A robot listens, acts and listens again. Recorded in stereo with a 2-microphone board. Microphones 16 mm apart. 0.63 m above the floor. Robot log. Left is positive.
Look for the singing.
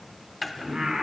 note: The singing: about 50° right or 130° right.
cmd yaw -50
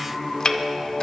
note: So it is at 25° right.
cmd yaw -25
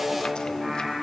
note: The singing is now 20° right.
cmd yaw -20
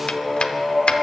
end: Facing the singing, 2 to 4 m away.